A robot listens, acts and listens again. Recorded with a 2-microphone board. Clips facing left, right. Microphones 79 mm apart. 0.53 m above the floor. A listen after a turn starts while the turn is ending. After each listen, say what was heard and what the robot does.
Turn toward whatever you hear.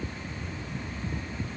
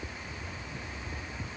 Keep listening.
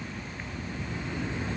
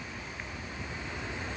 Keep listening.
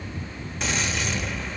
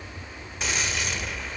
Turn 30° left.
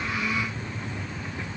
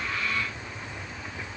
Keep listening.
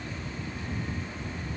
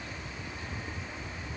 I heard a gunshot, but can't make it out now. It was about 30° right or 150° left.